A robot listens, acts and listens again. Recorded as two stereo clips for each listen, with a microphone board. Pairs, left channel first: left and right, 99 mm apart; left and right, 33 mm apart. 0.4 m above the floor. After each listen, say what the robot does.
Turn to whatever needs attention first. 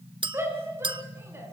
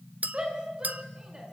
Turn 25° right.
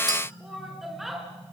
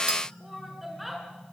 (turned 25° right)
Facing the shout, over 4 m away.